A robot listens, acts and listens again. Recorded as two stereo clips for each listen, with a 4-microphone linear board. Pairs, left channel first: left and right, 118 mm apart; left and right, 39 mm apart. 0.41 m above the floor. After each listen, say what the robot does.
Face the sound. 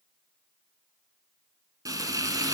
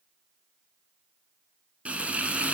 Turn 30° right.
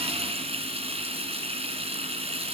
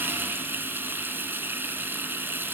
Turn 120° right.
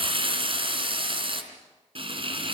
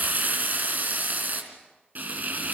Turn 50° right.
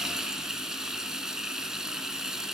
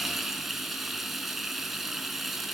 Found it: frying, straight ahead.